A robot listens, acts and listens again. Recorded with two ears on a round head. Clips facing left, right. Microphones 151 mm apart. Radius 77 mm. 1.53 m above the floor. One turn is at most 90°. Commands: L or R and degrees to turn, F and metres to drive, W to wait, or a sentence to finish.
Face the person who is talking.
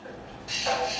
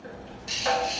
W
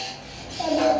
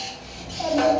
L30
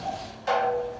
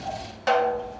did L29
L90
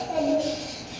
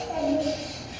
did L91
L50
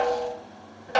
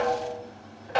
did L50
W
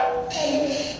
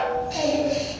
Found it: a child speaking, straight ahead, 1 to 2 m away.